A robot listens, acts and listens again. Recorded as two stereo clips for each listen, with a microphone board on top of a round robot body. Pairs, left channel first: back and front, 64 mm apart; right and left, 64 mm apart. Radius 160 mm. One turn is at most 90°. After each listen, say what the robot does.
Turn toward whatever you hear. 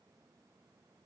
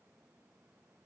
Keep listening.
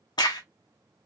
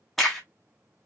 Turn 90° right.
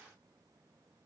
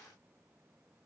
Turn 85° right.
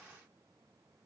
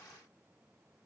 Facing where the crack came from. I can't hear it now.